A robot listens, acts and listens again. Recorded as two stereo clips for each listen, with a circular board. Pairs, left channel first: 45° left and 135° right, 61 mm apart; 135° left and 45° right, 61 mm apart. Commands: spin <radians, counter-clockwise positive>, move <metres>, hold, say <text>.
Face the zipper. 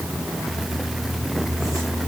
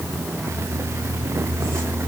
hold
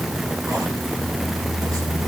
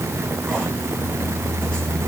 hold
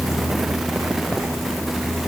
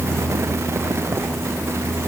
say I can't make out a zipper.